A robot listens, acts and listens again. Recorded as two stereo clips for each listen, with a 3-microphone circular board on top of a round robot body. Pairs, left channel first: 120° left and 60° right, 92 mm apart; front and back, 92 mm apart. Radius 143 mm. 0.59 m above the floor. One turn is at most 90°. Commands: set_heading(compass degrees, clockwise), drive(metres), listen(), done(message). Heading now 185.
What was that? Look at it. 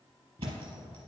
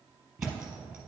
set_heading(275)
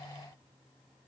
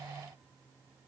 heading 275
done("Facing where the thud came from. I can't hear it now.")